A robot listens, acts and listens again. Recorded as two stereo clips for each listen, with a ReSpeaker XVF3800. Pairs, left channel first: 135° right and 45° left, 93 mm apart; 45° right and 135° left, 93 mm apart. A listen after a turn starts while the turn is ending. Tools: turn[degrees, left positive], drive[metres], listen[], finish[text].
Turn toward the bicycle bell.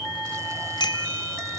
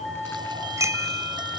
Thought: The bicycle bell: 170° right.
Action: turn[-170]
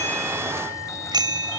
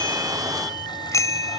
Thought: The bicycle bell is now 10° left.
Action: turn[10]
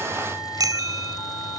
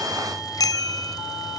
Action: finish[Found it: a bicycle bell, straight ahead.]